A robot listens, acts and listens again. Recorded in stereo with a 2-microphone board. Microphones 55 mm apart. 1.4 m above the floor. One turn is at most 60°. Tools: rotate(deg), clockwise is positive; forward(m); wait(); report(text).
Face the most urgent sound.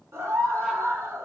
rotate(60)
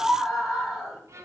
report("Found it: a scream, straight ahead.")